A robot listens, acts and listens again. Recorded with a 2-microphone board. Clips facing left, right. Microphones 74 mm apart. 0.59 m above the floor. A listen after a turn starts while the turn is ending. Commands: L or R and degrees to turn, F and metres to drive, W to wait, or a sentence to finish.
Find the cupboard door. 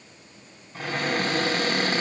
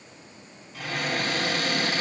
L40
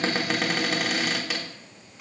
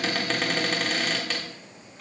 Facing the cupboard door, 1 to 2 m away.